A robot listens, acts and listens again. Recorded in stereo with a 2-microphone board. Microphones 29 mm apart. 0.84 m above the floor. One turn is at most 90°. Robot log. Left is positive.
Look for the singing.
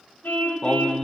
note: The singing: about 30° left or 150° left.
cmd yaw +30
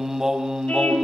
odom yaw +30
note: So it is at 25° right.
cmd yaw -25
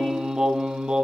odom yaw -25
note: The singing is now 30° right.
cmd yaw -30
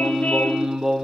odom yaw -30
note: The singing is now 15° right.
cmd yaw -15
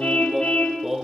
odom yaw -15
note: The singing is now 10° right.
cmd yaw -10
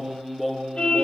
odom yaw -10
end: Facing the singing.